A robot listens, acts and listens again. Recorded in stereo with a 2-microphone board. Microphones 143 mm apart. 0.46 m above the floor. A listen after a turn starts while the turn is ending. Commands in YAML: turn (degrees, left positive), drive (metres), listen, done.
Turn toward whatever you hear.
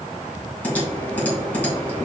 turn: 30
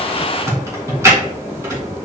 turn: -20
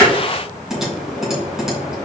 done: "Found it: typing on a keyboard, straight ahead."